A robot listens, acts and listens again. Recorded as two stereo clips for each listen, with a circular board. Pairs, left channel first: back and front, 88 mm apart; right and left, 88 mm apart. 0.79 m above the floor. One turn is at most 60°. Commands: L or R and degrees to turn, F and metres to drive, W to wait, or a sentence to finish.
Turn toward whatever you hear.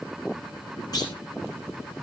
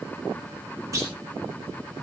L60
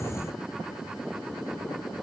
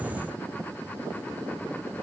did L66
L60
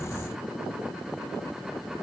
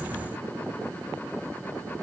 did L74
Facing where the clunk came from. I can't hear it now.